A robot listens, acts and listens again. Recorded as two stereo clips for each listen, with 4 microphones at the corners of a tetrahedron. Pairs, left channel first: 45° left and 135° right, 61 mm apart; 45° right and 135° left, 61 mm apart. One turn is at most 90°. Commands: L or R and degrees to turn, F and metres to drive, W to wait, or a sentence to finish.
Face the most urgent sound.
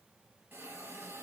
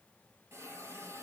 W
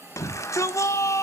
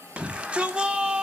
L70
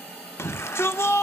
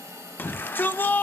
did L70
Found it: a shout, straight ahead.